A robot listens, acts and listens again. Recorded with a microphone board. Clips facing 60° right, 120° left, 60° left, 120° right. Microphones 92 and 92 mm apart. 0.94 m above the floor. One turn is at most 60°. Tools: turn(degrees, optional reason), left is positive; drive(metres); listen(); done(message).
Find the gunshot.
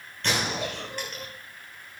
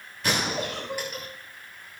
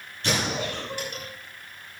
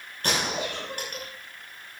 turn(degrees=-60, reason="The gunshot: 160° right.")
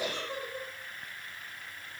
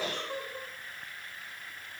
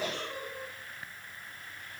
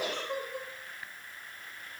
turn(degrees=-60, reason="Nothing new. It was at 100° right.")
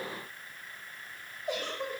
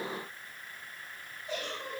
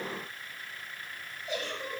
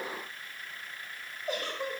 turn(degrees=-40, reason="Nothing new. It was at 40° right.")
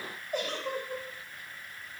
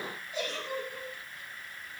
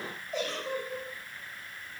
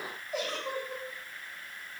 done("Facing where the gunshot came from. I can't hear it now.")